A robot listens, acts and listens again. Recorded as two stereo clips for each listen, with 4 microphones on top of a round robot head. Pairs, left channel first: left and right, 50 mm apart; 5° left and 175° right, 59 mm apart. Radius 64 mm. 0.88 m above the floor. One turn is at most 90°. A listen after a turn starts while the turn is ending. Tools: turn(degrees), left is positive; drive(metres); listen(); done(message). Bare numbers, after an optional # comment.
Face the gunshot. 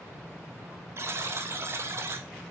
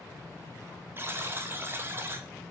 listen()
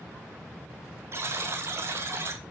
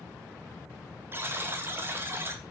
listen()
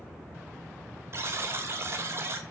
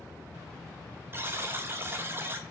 done("I can't make out a gunshot, only a buzzer.")